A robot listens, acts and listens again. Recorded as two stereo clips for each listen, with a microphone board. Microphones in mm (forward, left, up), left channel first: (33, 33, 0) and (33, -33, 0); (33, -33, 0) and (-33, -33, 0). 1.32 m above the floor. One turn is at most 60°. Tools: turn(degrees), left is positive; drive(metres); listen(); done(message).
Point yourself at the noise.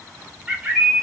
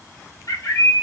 turn(degrees=-15)
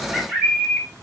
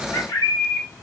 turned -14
done("Facing the bird.")